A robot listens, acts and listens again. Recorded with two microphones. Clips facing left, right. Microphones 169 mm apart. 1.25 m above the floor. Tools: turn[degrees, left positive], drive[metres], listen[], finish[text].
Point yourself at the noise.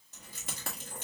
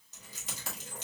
Thought: The keys jangling: about 55° left or 125° left.
Action: turn[55]
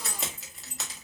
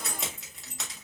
Action: finish[Found it: keys jangling, straight ahead, 1 to 2 m away.]